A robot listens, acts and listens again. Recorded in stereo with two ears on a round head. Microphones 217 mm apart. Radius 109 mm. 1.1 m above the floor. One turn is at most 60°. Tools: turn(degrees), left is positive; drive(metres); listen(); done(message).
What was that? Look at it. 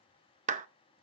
turn(degrees=-30)
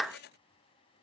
done("Facing the clap, under 1 m away.")